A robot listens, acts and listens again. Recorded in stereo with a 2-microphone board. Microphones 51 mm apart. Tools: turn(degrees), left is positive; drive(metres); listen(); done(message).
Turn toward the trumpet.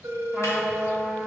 turn(degrees=30)
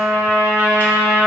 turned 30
turn(degrees=-30)
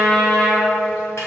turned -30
done("Facing the trumpet, 1 to 2 m away.")